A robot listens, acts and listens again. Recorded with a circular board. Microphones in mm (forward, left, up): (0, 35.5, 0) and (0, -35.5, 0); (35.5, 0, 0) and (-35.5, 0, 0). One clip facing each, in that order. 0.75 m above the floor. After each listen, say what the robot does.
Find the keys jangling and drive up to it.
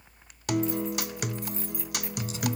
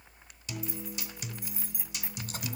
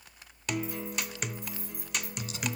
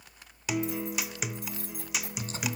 Turn 170° right.
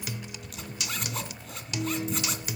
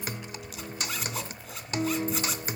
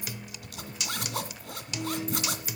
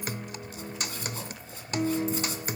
Keep listening.
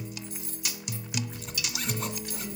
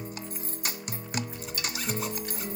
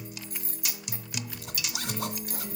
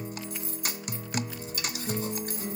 Turn 45° right.
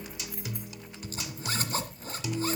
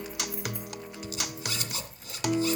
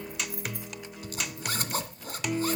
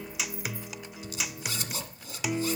Drive 1.0 m forward.
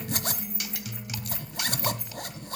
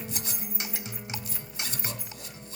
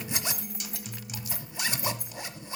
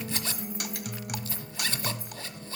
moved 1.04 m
Drive 1.0 m forward.
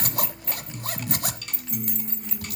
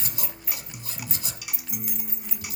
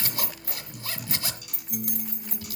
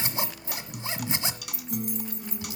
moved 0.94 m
Drive 1.0 m forward.
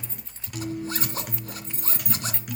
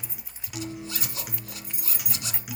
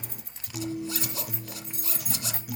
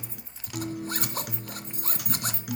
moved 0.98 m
Turn 10° right.
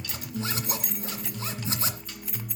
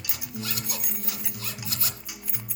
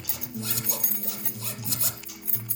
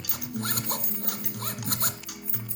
Drive 1.0 m forward.
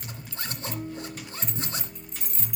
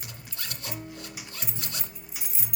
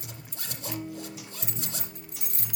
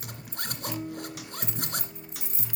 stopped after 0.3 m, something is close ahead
Arrived at the keys jangling, straight ahead.